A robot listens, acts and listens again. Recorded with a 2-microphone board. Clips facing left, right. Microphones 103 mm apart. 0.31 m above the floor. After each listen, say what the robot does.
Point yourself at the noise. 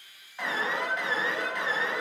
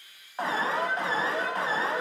Turn 40° right.
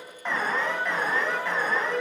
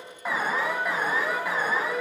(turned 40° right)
Turn 10° right.
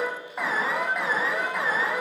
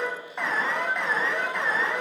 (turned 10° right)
Facing the alarm.